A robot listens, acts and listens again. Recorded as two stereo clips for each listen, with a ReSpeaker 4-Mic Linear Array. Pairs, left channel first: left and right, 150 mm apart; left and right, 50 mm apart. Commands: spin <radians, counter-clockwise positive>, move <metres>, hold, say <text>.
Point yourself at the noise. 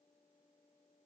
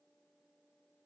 hold
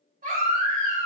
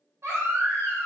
spin -1.22
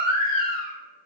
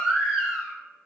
say Facing the baby crying.